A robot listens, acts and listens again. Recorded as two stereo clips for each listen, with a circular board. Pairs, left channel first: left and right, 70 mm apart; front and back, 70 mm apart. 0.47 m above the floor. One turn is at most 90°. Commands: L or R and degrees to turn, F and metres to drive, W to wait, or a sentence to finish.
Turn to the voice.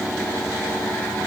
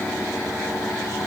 W
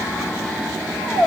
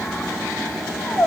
W
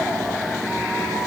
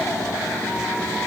I can't make out anyone speaking, only a squeak.